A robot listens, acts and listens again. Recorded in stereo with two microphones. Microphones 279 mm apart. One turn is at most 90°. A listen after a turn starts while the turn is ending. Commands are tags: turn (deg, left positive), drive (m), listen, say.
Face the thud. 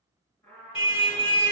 <listen/>
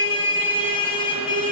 <listen/>
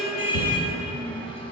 <turn deg="55"/>
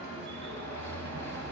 <listen/>
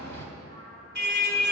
<say>I heard a thud, but can't make it out now. It was about straight ahead or 70° left.</say>